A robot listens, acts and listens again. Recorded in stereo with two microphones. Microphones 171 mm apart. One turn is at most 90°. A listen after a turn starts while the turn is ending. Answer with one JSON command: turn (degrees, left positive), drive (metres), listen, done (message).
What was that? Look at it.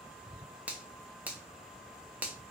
{"turn": -30}
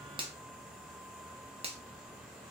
{"turn": -90}
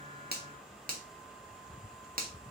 {"turn": -65}
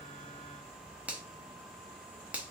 {"turn": -10}
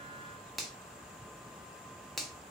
{"done": "Found it: a finger snap, straight ahead, under 1 m away."}